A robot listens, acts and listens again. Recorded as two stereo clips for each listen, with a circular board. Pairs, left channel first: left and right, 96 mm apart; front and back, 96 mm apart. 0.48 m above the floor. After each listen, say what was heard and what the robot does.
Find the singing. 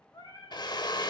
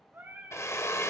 The singing: 120° left. Turn 120° left.
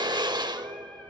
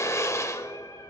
Keep listening.
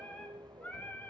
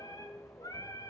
The singing is now 25° left. Turn 25° left.
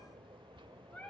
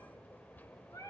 The singing is now 25° left. Turn 25° left.
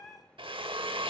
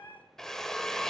The singing is now 20° left. Turn 20° left.
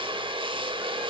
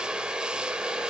Keep listening.
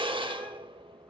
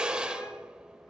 Keep listening.
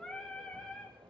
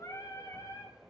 The singing is now 15° left. Turn 15° left.
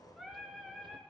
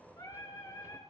Facing the singing, 1 to 2 m away.